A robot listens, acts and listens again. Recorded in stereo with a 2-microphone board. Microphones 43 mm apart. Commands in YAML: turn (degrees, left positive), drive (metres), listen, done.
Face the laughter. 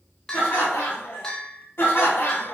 turn: 55
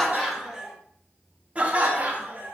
turn: -45
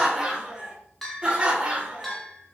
turn: -25
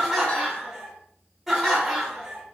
done: "Facing the laughter, 1 to 2 m away."